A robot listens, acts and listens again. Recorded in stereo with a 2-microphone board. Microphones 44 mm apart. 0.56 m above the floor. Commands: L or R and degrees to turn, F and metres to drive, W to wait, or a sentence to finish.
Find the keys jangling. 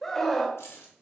L90
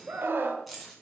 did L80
Found it: keys jangling, straight ahead, 2 to 4 m away.